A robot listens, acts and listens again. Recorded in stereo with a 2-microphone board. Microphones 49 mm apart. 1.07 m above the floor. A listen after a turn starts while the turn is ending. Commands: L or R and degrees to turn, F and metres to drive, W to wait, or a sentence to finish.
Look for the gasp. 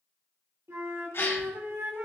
L60
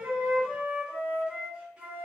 W
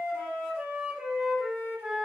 I heard a gasp, but can't make it out now. It was about straight ahead or 60° left.